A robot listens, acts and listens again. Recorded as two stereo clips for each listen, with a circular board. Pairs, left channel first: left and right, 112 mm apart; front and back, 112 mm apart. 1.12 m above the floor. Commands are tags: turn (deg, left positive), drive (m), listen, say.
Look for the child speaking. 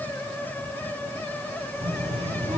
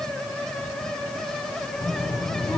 <turn deg="-65"/>
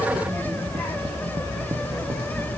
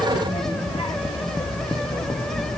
<turn deg="10"/>
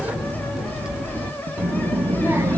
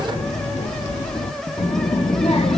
<turn deg="-20"/>
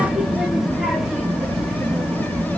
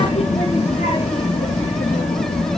<say>Facing the child speaking, 1 to 2 m away.</say>